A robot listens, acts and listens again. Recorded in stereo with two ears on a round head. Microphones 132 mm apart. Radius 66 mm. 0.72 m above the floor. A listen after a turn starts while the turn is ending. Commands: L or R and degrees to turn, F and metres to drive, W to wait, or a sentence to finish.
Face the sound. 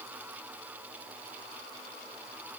W
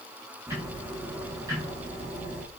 R20
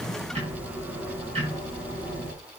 R140
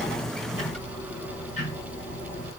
L50
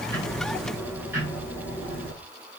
R15
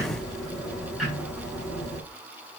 Found it: ticking, straight ahead.